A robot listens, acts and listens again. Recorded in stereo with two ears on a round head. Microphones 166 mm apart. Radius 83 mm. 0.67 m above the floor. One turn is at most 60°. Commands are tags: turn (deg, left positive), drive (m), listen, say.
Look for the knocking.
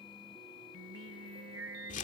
<listen/>
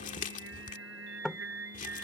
<turn deg="30"/>
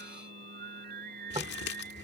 <listen/>
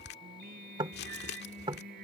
<turn deg="-25"/>
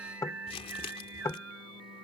<turn deg="20"/>
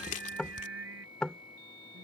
<say>Facing the knocking.</say>